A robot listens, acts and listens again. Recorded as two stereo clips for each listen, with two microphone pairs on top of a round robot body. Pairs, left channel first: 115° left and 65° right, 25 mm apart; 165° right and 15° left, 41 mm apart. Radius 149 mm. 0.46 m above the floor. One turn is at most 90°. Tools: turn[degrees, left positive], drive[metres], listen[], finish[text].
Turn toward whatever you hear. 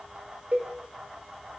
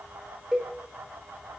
Thought: The cowbell: 60° right.
Action: turn[-60]
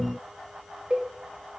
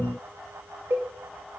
Thought: The cowbell is now 10° right.
Action: turn[-10]
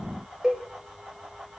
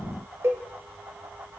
Action: finish[Facing the cowbell, under 1 m away.]